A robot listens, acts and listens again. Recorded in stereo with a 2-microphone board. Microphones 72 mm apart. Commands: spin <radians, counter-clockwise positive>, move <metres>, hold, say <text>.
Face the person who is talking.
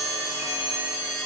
hold
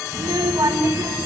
spin -1.13
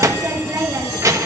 spin -0.87
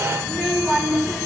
say Facing the child speaking, 1 to 2 m away.